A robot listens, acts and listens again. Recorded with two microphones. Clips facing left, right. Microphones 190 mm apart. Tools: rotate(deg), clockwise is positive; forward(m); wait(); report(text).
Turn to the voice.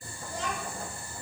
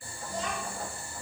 rotate(-60)
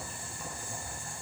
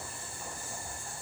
wait()
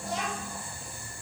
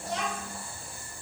rotate(-10)
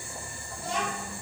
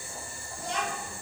report("Facing the child speaking, 1 to 2 m away.")